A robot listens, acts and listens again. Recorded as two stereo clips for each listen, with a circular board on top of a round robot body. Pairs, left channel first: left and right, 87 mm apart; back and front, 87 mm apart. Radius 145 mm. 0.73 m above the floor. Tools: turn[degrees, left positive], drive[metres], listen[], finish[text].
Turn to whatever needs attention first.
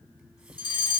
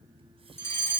Thought: The fire alarm: 120° left.
Action: turn[120]
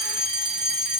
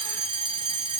Action: finish[Found it: a fire alarm, straight ahead, 2 to 4 m away.]